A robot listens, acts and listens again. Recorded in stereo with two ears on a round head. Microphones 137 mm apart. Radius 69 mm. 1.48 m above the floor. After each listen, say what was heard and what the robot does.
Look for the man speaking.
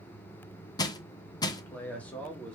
Turn 30° left.
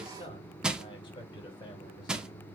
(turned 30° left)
So it is at 150° left. Turn 150° left.
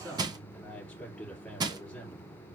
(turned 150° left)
The man speaking is now 10° left. Turn 10° left.
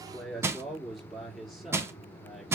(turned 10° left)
Found it: a man speaking, straight ahead, 2 to 4 m away.